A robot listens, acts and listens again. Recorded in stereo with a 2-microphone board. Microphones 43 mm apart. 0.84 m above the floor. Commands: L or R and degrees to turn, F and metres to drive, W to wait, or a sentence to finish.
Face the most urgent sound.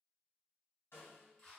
W
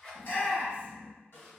L55
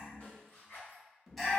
Found it: a shout, straight ahead.